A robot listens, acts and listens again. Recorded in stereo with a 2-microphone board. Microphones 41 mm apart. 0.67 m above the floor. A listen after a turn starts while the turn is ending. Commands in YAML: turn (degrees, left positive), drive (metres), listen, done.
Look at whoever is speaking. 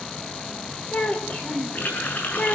turn: 40
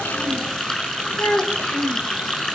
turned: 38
turn: 105
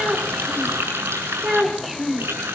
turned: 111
turn: -10
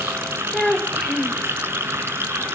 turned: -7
done: "Facing the child speaking, 2 to 4 m away."